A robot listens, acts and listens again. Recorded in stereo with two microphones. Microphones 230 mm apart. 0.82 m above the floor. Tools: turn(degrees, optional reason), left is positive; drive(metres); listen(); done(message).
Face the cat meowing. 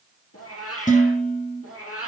turn(degrees=90)
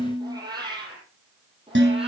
turn(degrees=-25, reason="So it is at 25° right.")
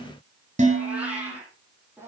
turn(degrees=-10, reason="The cat meowing is now 10° right.")
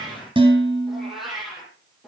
done("Found it: a cat meowing, straight ahead.")